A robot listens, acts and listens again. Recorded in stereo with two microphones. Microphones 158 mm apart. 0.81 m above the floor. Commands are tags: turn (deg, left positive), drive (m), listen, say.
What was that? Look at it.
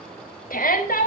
<turn deg="65"/>
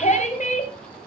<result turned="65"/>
<turn deg="50"/>
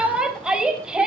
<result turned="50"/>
<say>Facing the shout, over 4 m away.</say>